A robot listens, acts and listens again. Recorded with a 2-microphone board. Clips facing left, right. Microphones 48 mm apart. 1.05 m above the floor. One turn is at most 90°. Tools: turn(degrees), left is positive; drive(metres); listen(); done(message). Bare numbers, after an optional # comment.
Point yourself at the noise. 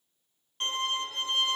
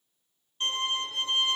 turn(90)
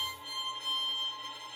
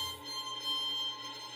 done("Facing the violin, under 1 m away.")